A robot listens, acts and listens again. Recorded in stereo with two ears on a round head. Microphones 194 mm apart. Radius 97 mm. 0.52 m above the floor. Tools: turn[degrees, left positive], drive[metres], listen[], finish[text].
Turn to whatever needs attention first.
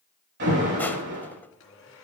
Thought: The alarm: about 55° right or 125° right.
Action: turn[-55]
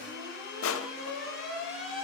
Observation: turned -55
Action: finish[Facing the alarm, over 4 m away.]